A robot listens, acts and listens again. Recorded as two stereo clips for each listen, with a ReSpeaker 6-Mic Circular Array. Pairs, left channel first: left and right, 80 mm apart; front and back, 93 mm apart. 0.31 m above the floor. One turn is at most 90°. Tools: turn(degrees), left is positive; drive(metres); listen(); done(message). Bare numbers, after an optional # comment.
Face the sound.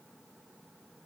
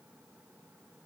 listen()
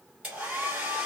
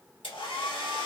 # The hair dryer: 15° right.
turn(-15)
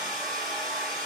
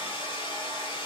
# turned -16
done("Found it: a hair dryer, straight ahead, 1 to 2 m away.")